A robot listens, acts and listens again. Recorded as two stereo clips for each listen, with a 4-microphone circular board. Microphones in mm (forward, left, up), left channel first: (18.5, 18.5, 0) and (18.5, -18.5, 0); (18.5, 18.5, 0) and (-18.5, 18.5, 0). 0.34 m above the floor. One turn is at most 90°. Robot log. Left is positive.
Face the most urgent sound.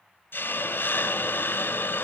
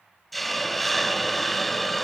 cmd idle
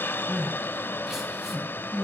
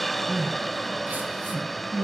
note: The crying: 170° right.
cmd yaw -90
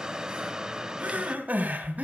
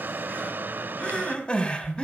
note: The crying is now 60° right.
cmd yaw -60
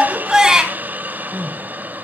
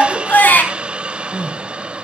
note: The crying is now 20° right.
cmd yaw -20
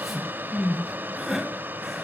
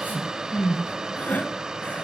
end: Facing the crying.